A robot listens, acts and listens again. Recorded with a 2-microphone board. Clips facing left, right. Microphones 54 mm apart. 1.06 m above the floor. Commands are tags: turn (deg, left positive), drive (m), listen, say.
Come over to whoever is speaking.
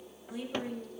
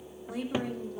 <turn deg="-65"/>
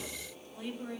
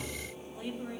<drive m="1.0"/>
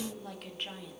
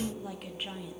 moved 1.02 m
<drive m="1.0"/>
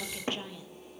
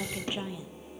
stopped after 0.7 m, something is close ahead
<turn deg="-15"/>
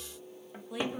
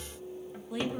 <say>I am next to the woman speaking.</say>